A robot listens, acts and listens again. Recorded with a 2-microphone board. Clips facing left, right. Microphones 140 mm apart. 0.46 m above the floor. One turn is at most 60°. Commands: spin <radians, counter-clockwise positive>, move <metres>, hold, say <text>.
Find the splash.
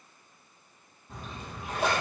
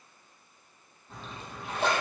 spin 0.52
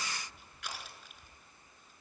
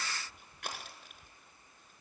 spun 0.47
hold
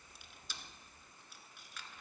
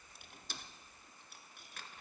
say I heard a splash, but can't make it out now. It was about 20° right or 145° left.